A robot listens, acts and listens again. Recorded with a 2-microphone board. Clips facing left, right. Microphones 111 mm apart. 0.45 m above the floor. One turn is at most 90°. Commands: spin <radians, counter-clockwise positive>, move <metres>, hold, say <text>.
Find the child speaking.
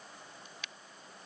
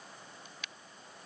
hold
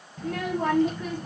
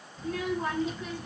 spin 0.87
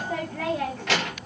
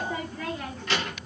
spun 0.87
spin 1.31
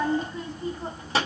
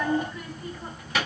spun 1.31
spin 0.52
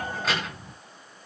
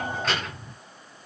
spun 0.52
say Facing the child speaking, 2 to 4 m away.